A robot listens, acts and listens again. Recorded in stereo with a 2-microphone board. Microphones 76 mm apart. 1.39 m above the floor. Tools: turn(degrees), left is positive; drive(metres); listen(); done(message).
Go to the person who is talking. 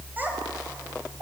turn(degrees=-25)
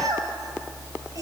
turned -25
turn(degrees=-130)
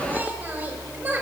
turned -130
turn(degrees=-25)
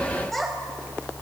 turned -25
drive(metres=1.0)
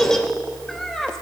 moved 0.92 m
drive(metres=1.0)
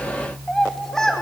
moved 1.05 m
turn(degrees=10)
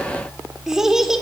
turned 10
drive(metres=1.0)
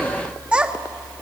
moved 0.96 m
turn(degrees=-15)
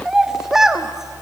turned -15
drive(metres=1.0)
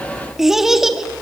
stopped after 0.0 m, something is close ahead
done("Arrived at the child speaking, straight ahead.")